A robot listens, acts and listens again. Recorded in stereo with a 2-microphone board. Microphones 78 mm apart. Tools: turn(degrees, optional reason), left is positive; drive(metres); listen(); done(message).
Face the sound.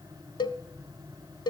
turn(degrees=90)
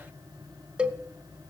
turn(degrees=-15, reason="So it is at 15° right.")
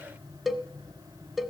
done("Found it: a cowbell, straight ahead, under 1 m away.")